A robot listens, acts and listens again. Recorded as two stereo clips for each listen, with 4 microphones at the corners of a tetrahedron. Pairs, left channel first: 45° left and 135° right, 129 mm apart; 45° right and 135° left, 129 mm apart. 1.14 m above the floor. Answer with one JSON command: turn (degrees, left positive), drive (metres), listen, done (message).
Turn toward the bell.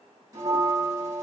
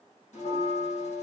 {"turn": -70}
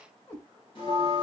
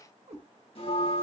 {"done": "Found it: a bell, straight ahead."}